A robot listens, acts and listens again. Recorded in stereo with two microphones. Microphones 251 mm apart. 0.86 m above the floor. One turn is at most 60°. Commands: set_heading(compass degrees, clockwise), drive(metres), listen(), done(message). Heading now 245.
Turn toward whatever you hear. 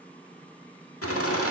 set_heading(185)
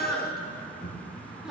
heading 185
done("Found it: laughter, straight ahead.")